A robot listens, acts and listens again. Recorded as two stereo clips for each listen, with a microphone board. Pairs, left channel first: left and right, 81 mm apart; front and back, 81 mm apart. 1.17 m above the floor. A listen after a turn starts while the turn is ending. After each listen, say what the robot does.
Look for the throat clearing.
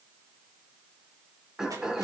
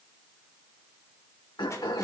Turn 10° right.
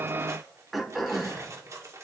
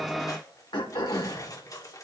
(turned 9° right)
Facing the throat clearing.